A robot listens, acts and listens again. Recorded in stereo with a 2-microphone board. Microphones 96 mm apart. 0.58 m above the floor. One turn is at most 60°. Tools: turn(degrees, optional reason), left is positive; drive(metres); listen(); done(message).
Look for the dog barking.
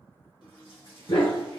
turn(degrees=60, reason="The dog barking: about 60° left or 120° left.")
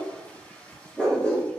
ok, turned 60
turn(degrees=15, reason="So it is at 15° left.")
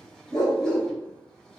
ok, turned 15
done("Found it: a dog barking, straight ahead.")